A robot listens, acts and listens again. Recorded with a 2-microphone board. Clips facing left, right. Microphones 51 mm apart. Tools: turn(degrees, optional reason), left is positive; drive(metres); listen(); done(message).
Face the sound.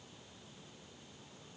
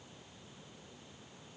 listen()
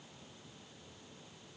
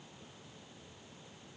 listen()
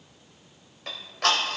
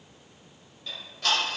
turn(degrees=90)
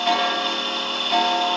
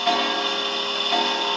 done("Facing the ticking.")